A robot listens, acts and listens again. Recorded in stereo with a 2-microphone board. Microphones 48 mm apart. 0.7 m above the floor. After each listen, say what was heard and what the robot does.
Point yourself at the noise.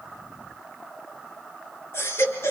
The baby crying: about 55° left or 125° left. Turn 55° left.
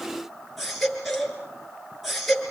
Found it: a baby crying, straight ahead, over 4 m away.